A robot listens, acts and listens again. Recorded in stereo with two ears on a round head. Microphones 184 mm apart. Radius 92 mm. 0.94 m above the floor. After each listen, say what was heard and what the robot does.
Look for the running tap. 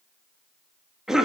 Keep listening.
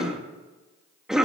Keep listening.
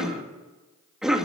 I can't make out a running tap to turn to.